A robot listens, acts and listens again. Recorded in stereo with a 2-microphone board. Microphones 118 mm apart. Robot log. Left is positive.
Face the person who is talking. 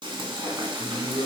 note: The man speaking: about 70° left or 110° left.
cmd yaw +70
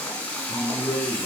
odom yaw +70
note: So it is at 20° left.
cmd yaw +20
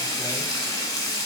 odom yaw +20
cmd idle
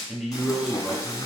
end: Found it: a man speaking, straight ahead, 1 to 2 m away.